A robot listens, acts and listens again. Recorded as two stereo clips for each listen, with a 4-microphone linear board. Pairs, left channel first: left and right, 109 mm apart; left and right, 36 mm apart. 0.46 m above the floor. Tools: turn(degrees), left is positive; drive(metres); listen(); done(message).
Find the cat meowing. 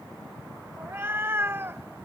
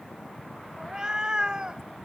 turn(degrees=-25)
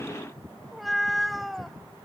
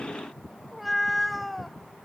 done("Found it: a cat meowing, straight ahead.")